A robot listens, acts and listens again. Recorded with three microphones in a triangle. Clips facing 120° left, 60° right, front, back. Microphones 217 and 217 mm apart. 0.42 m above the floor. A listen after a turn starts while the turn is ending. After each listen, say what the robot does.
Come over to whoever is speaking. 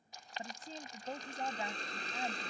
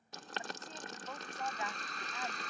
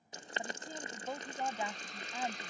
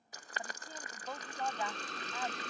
Turn 70° left.
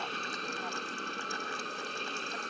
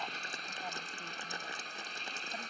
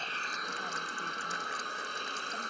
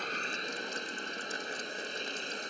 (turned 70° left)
Keep listening.
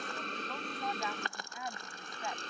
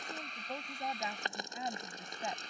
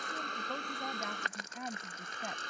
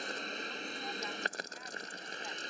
Drive 1.0 m forward.
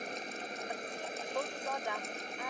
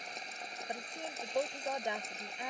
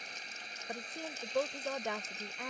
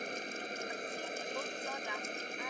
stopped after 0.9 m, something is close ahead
Arrived at the woman speaking, straight ahead.